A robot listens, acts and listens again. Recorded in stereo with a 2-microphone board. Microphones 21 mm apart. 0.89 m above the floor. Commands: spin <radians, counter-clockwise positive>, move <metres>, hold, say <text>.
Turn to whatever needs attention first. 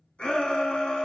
spin 1.13
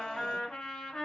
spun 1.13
hold
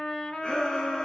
spin 0.87
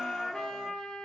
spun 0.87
hold
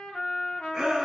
spin -0.44
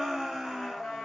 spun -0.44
say Facing the shout.